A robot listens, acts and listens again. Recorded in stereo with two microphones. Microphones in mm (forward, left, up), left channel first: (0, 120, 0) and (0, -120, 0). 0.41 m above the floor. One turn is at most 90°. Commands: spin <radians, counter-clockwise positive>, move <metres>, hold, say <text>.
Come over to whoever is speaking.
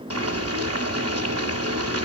hold
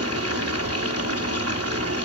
hold
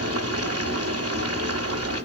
say I can't make out anyone speaking, only boiling.